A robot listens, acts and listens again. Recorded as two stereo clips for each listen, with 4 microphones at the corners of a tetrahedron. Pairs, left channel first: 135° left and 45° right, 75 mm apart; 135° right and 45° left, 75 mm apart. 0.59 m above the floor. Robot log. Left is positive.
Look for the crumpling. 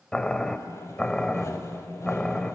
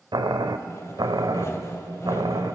cmd idle
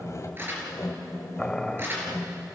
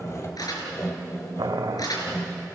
note: The crumpling: 105° right.
cmd yaw -105
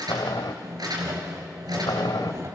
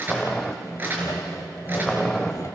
note: The crumpling is now 15° right.
cmd yaw -15
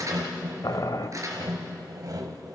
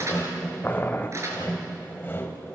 end: Facing the crumpling, over 4 m away.